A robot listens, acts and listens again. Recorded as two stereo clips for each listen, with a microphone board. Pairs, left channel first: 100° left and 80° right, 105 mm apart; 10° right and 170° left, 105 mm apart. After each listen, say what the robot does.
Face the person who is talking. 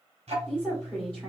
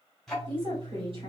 Turn 180° left.
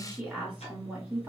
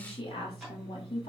Facing the woman speaking.